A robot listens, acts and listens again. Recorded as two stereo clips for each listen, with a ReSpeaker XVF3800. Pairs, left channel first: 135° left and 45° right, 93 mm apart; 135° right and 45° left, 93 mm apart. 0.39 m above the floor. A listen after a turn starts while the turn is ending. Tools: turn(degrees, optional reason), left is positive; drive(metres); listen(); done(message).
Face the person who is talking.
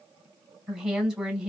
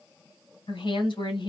turn(degrees=-125, reason="The woman speaking: 125° right.")
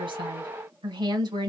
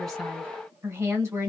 turn(degrees=-10, reason="The woman speaking is now 10° right.")
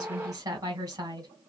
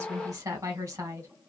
done("Found it: a woman speaking, straight ahead.")